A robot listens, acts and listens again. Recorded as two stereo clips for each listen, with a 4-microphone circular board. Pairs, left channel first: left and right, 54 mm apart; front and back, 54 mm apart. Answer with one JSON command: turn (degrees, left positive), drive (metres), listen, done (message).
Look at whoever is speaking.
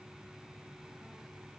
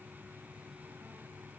{"listen": true}
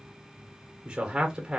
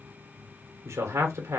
{"turn": -165}
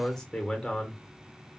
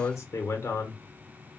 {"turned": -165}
{"turn": 10}
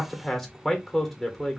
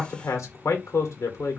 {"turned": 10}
{"done": "Facing the man speaking, under 1 m away."}